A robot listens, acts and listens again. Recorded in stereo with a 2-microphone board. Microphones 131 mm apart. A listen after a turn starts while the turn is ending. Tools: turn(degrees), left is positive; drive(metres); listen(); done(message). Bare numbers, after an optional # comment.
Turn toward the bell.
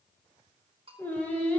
# The bell: about 40° right or 140° right.
turn(-40)
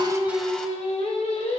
listen()
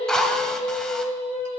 listen()
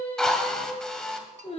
done("I heard a bell, but can't make it out now. It was about straight ahead or 100° right.")